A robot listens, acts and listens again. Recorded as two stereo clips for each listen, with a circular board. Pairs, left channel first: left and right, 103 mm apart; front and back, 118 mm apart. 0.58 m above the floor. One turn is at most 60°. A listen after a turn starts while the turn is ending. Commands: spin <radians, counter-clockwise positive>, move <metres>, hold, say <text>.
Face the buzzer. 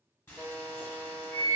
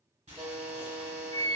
spin -1.05
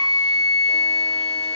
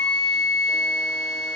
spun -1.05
spin -1.05
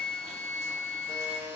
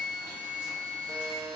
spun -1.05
spin -0.87
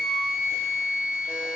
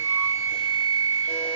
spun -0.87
hold
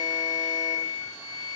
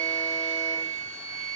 hold
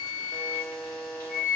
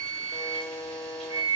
spin 0.17
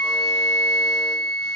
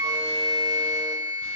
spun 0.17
hold
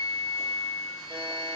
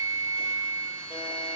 hold
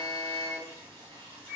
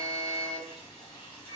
say Facing where the buzzer came from. I can't hear it now.